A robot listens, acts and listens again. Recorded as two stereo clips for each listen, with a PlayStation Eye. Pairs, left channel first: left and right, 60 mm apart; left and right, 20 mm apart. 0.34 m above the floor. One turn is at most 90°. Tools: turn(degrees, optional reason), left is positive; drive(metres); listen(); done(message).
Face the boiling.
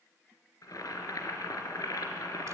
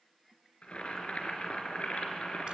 turn(degrees=75, reason="The boiling: about 75° left or 105° left.")
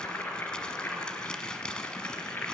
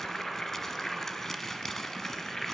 turn(degrees=30, reason="So it is at 30° left.")
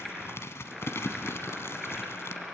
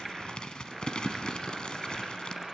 done("Found it: boiling, straight ahead, 2 to 4 m away.")